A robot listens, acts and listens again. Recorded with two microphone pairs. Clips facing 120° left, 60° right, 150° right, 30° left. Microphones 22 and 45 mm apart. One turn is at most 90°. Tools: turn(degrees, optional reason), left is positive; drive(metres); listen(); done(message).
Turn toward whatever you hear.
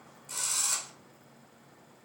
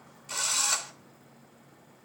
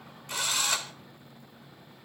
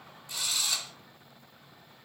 turn(degrees=-90, reason="The drill: 115° right.")
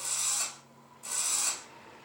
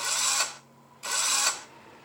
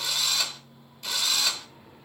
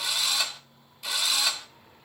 turn(degrees=-50, reason="The drill is now 50° right.")
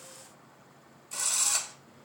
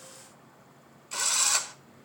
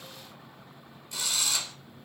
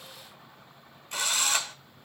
turn(degrees=-10, reason="The drill is now 10° right.")
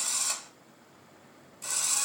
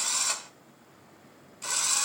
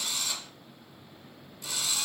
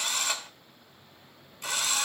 done("Found it: a drill, straight ahead.")